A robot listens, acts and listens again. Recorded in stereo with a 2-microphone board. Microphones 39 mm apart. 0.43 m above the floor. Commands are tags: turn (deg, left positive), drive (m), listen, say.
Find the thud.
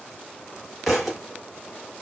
<turn deg="30"/>
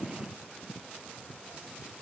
<listen/>
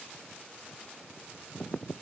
<say>I heard a thud, but can't make it out now. It was about 30° right or 150° left.</say>